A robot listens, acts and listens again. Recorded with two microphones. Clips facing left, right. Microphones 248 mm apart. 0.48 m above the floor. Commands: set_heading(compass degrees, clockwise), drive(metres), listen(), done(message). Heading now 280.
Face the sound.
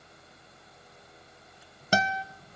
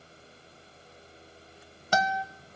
set_heading(250)
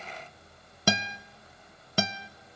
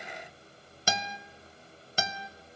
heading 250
set_heading(130)
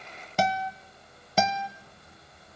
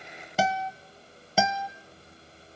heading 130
done("Facing the guitar, under 1 m away.")